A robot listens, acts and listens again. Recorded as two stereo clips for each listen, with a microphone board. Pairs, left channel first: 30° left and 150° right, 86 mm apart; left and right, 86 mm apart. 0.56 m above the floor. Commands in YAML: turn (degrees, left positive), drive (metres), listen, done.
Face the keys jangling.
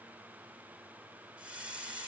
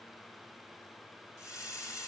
listen: true
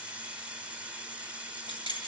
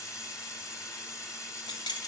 turn: 55
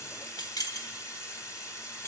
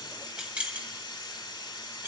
turn: -25
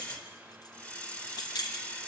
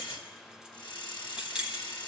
turn: -10
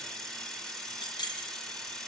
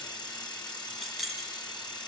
done: "Facing the keys jangling."